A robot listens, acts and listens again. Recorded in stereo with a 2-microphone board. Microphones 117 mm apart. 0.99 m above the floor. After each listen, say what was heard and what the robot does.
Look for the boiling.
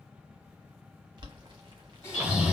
The boiling: about 40° right or 140° right. Turn 40° right.
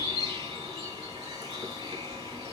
Keep listening.
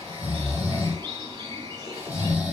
Keep listening.
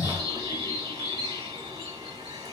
I heard boiling, but can't make it out now. It was about straight ahead or 100° right.